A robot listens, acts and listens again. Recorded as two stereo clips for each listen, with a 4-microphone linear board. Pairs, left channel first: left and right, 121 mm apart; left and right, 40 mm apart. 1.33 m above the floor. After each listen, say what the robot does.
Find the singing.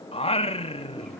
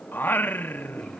Turn 50° left.
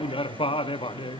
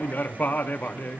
Turn 60° left.
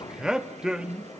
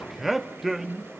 Found it: singing, straight ahead.